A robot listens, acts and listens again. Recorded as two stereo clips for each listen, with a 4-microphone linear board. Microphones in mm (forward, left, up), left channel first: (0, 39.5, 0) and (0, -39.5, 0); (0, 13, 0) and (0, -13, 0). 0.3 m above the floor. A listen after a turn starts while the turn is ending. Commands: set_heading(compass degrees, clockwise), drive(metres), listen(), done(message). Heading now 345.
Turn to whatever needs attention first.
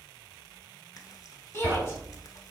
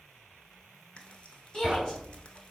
set_heading(315)
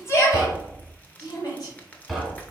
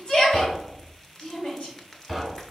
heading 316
set_heading(196)
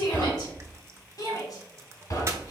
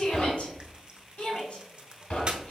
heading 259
set_heading(199)
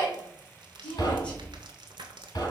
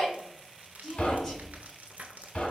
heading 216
set_heading(196)
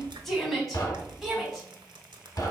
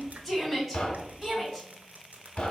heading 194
done("Facing the shout.")